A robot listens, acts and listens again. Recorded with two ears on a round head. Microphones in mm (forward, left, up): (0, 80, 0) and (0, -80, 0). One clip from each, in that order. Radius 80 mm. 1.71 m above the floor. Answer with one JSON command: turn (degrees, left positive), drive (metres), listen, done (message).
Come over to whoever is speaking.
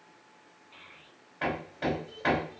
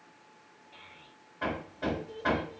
{"turn": 30}
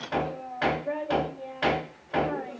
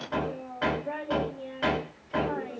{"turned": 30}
{"turn": -15}
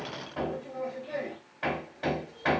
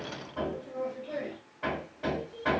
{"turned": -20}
{"drive": 1.0}
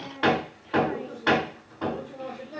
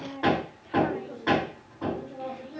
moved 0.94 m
{"turn": 10}
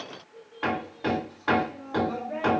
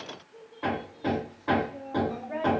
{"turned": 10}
{"drive": 1.0}
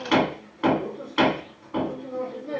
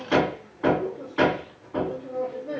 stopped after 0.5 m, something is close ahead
{"listen": true}
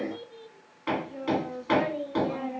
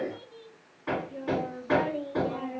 {"turn": 10}
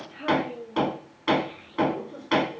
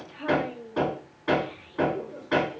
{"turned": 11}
{"done": "I am next to the child speaking."}